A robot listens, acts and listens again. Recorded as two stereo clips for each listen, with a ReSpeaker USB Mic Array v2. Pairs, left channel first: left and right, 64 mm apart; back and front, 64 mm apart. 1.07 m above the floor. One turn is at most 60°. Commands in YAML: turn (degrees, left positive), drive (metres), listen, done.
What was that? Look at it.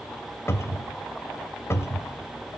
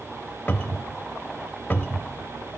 turn: 60
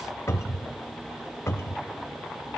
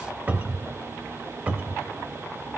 turn: 60
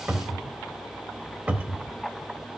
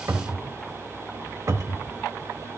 turn: -30
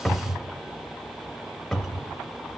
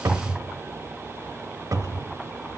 done: "Found it: a cupboard door, straight ahead, under 1 m away."